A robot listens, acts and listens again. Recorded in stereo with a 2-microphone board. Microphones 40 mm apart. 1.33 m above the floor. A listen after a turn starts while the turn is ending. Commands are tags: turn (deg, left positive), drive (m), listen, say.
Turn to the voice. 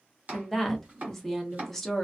<turn deg="30"/>
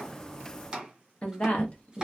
<turn deg="145"/>
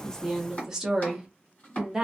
<turn deg="-15"/>
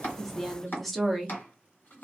<say>Facing the woman speaking.</say>